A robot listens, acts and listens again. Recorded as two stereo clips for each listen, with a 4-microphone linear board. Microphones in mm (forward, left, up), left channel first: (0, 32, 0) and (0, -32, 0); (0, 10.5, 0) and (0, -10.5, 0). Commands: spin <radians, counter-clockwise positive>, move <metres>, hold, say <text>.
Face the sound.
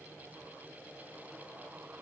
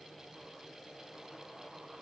hold
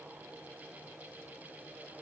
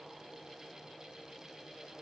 hold
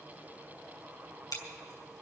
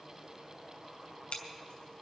spin 1.57
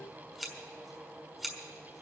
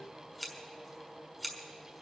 say Found it: scissors, straight ahead.